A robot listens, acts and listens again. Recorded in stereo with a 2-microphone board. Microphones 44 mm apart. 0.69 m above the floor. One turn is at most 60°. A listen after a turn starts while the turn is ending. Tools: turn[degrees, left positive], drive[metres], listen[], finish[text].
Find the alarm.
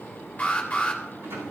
Thought: The alarm: about 35° left or 145° left.
Action: turn[35]
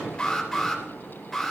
Action: finish[Found it: an alarm, straight ahead.]